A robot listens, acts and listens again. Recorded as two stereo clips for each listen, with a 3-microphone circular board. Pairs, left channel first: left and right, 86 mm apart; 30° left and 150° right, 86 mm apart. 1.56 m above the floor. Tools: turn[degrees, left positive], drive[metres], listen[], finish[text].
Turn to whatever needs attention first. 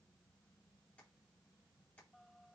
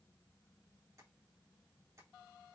Action: listen[]
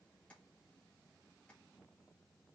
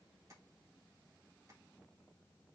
Action: listen[]
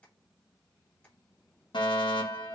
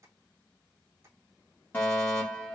Thought: The fire alarm: 95° left.
Action: turn[95]
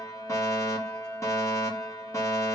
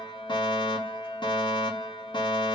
Thought: The fire alarm is now 40° left.
Action: turn[40]
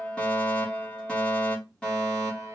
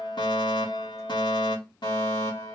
Thought: The fire alarm is now 10° left.
Action: turn[10]
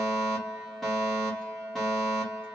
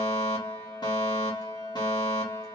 Action: finish[Facing the fire alarm.]